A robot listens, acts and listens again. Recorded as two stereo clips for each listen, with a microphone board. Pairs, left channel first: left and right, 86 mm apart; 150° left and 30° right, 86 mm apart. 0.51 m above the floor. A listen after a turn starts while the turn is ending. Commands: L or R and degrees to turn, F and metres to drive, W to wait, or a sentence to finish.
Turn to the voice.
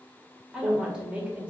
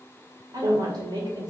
R20
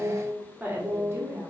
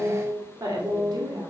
R45
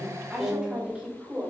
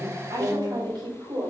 R25
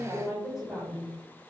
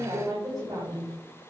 R10
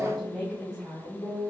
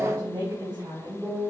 Facing the woman speaking, 2 to 4 m away.